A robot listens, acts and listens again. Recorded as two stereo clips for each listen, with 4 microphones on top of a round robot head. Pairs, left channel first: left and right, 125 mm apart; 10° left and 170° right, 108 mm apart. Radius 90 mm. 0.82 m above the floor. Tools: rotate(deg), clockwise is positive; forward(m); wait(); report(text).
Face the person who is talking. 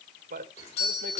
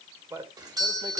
rotate(100)
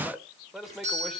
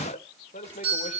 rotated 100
report("Found it: a man speaking, straight ahead, 2 to 4 m away.")